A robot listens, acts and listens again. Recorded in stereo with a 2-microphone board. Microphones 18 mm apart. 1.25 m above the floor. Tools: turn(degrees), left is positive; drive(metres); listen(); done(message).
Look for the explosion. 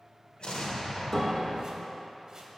turn(degrees=70)
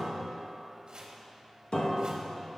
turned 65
listen()
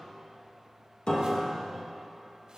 done("I heard an explosion, but can't make it out now. It was about 5° left or 45° left.")